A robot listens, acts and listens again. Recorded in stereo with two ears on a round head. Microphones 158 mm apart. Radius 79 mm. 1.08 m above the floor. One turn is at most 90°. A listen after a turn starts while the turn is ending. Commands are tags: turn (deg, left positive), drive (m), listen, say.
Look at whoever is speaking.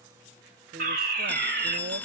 <turn deg="-60"/>
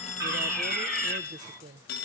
<turn deg="-50"/>
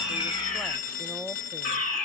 <listen/>
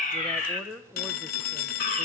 <say>Found it: a woman speaking, straight ahead, under 1 m away.</say>